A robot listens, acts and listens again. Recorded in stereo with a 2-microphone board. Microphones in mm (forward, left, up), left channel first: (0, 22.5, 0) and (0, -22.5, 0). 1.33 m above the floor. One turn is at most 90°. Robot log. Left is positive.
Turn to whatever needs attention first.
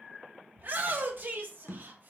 note: The shout: about 45° right or 135° right.
cmd yaw -45
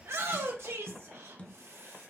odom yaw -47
note: So it is at 90° right.
cmd yaw -90
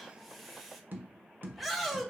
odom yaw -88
end: Facing the shout, 1 to 2 m away.